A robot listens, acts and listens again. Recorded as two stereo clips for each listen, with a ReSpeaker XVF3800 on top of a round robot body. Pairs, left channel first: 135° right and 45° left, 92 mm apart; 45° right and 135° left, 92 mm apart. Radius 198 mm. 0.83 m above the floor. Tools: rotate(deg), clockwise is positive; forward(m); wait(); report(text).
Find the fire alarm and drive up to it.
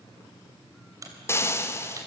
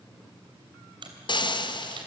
wait()
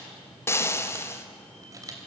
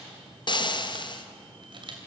wait()
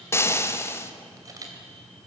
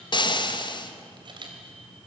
report("I can't make out a fire alarm to turn to.")